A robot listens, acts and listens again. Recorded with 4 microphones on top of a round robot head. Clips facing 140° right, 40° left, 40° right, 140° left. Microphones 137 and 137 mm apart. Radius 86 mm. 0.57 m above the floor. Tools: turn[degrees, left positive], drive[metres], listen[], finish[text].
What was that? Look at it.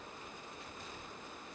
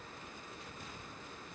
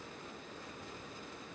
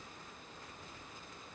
Action: listen[]
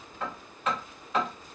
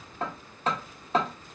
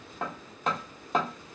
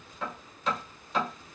Thought: The hammering: 10° right.
Action: turn[-10]
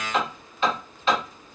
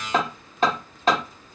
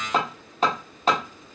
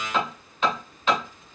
Action: finish[Found it: hammering, straight ahead, 1 to 2 m away.]